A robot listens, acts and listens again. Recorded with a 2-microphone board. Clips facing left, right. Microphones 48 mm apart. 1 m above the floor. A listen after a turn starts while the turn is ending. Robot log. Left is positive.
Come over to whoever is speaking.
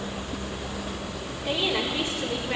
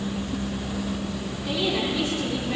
note: The woman speaking: about 25° left or 155° left.
cmd yaw +25
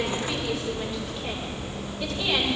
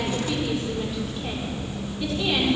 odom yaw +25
cmd fwd 1.0
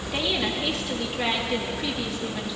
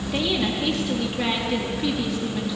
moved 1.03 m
cmd fwd 1.0
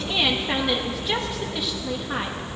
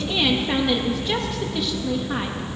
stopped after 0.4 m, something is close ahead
end: Arrived at the woman speaking, straight ahead.